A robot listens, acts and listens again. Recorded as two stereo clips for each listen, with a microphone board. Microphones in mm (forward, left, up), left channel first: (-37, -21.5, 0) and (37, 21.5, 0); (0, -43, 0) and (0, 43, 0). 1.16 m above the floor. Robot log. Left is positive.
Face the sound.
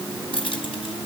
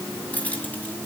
note: The keys jangling: 160° right.
cmd yaw -160
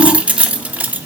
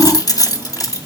note: The keys jangling is now 40° right.
cmd yaw -40
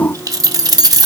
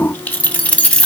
note: The keys jangling is now 15° right.
cmd yaw -15
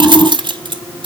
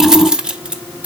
note: The keys jangling is now 15° left.
cmd yaw +15
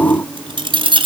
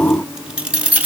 note: The keys jangling is now 20° left.
cmd yaw +20
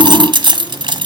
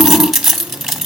end: Found it: keys jangling, straight ahead.